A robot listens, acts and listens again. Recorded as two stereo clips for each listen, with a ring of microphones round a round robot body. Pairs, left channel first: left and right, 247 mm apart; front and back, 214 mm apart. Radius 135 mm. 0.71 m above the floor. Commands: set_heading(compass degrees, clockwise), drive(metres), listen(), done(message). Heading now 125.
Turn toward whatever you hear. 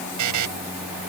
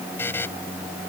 set_heading(205)
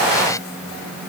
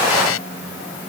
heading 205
listen()
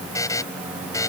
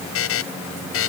set_heading(195)
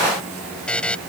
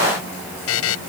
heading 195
done("Facing the buzzer.")